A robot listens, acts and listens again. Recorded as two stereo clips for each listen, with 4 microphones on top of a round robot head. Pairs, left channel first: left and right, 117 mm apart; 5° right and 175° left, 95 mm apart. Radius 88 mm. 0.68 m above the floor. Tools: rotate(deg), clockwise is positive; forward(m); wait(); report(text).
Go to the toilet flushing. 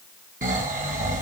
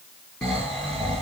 wait()
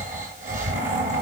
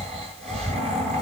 wait()
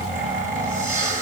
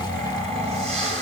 report("I can't make out a toilet flushing, only snoring.")